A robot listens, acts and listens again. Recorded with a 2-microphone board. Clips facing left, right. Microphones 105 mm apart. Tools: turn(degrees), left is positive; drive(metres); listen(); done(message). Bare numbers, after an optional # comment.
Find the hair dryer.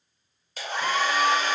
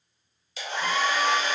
# The hair dryer: about 50° left or 130° left.
turn(50)
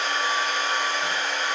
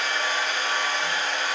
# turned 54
done("Facing the hair dryer, 1 to 2 m away.")